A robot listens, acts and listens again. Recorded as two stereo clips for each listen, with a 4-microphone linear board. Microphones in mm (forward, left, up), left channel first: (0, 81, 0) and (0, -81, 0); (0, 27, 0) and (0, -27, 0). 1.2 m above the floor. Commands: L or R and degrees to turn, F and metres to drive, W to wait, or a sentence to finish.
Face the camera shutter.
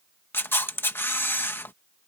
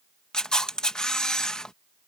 L30
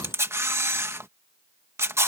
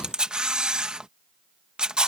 R15
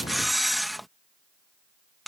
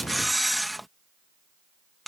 Facing the camera shutter.